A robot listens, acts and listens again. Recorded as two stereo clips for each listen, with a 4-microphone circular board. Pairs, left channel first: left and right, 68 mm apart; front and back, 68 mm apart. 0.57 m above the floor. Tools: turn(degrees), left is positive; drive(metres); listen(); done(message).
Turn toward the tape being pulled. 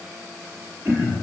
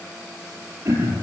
listen()
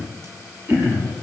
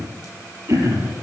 listen()
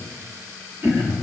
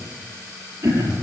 done("I can't make out tape being pulled, only throat clearing.")